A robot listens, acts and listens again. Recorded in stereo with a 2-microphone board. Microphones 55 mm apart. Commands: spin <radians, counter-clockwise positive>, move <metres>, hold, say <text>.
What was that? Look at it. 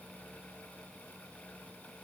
hold
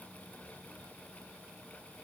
hold
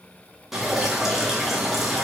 spin -0.52
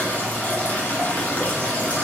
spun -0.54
spin 0.44
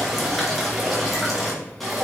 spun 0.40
say Facing the dripping.